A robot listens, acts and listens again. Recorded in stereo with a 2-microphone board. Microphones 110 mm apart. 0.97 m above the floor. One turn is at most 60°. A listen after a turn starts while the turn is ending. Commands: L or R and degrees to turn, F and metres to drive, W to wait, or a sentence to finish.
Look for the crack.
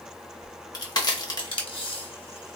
L40
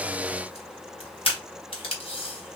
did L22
W
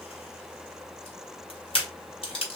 I heard a crack, but can't make it out now. It was about 15° left or 120° left.